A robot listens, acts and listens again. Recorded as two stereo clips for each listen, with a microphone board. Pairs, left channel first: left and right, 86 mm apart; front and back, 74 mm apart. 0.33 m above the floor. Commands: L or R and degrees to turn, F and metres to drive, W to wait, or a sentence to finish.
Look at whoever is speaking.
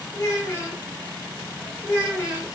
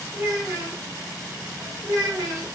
L140
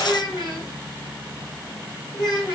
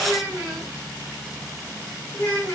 L50
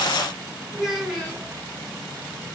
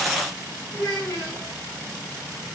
Found it: a child speaking, straight ahead, 2 to 4 m away.